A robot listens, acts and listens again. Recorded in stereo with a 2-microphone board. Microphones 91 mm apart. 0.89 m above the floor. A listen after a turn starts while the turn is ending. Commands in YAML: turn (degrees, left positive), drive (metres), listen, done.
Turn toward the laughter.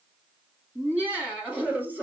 turn: -20
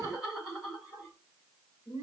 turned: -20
turn: -30
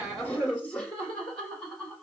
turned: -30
turn: 10
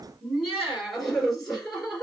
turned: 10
done: "Found it: laughter, straight ahead."